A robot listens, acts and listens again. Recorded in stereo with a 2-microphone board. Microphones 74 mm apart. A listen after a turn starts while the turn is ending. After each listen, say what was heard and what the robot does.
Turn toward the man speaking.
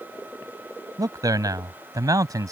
The man speaking: about 55° right or 125° right. Turn 55° right.
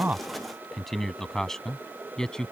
So it is at 10° left. Turn 10° left.
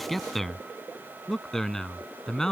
Facing the man speaking.